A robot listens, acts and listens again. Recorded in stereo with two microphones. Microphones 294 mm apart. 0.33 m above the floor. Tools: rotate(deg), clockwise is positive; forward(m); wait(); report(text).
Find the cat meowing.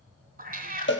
rotate(30)
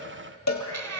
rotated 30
rotate(120)
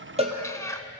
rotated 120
rotate(-10)
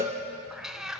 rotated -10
report("Facing the cat meowing.")